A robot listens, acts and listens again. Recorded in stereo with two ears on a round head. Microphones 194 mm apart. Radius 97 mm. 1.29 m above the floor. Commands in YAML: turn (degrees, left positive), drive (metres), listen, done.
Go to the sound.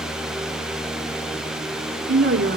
turn: -55
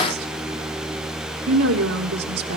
turn: -70
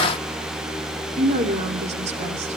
turn: -30
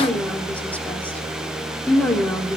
drive: 1.0
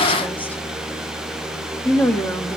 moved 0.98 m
turn: 10
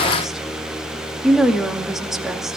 drive: 1.0
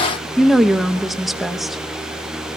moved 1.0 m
drive: 1.0
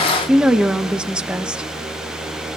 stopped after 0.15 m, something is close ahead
done: "I am next to the woman speaking."